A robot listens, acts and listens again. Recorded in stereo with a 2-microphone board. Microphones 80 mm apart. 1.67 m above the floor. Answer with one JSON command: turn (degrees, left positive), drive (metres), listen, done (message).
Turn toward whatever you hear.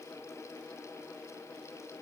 {"listen": true}
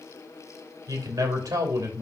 {"turn": -50}
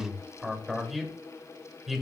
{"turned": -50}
{"done": "Found it: a man speaking, straight ahead, 2 to 4 m away."}